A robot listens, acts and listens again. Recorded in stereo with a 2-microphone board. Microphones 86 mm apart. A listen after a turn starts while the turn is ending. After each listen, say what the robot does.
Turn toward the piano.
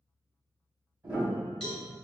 Turn 25° right.
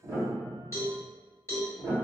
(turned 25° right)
Turn 125° right.
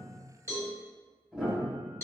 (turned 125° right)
Found it: a piano, straight ahead, 1 to 2 m away.